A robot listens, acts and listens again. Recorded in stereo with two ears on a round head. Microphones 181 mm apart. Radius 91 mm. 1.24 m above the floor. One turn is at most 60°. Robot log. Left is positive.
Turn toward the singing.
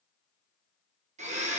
cmd idle
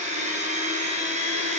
cmd idle
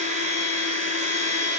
end: I can't make out singing, only a blender.